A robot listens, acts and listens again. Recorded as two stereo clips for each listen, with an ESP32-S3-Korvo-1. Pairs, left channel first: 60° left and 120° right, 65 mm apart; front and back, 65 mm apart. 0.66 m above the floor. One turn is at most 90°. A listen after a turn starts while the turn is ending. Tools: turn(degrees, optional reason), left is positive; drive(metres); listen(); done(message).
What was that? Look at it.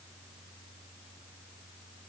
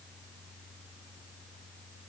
listen()
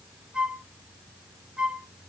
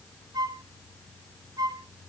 turn(degrees=90, reason="The flute: 165° left.")
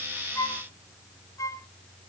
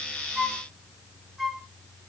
turn(degrees=85, reason="The flute is now 85° left.")
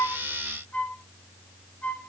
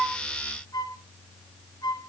done("Facing the flute.")